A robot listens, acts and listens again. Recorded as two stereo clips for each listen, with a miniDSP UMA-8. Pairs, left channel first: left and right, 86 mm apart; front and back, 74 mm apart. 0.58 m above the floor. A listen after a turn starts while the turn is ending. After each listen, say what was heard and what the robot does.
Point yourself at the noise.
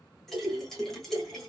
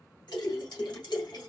Found it: a splash, straight ahead.